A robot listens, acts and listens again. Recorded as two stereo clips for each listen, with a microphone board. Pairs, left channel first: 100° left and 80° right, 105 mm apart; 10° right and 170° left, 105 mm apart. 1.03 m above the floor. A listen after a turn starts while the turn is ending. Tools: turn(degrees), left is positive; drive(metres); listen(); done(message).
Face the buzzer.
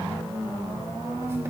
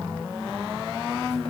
listen()
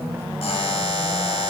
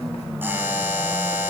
turn(degrees=100)
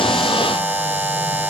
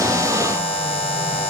turn(degrees=-10)
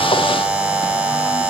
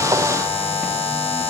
done("Facing the buzzer, 1 to 2 m away.")